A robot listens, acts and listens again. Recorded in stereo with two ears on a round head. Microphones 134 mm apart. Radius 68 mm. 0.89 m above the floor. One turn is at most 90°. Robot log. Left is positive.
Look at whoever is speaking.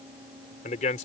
note: The man speaking: about 50° left or 130° left.
cmd yaw +50
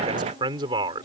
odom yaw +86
note: So it is at 30° right.
cmd yaw -30
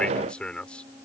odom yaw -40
end: Found it: a man speaking, straight ahead.